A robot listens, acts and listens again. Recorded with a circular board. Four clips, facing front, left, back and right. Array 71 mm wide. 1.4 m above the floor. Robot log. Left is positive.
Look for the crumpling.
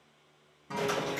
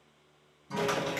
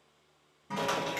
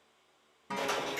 note: The crumpling: 135° left.
cmd yaw +135
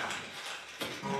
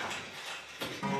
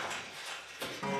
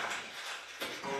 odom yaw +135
end: Found it: crumpling, straight ahead, 1 to 2 m away.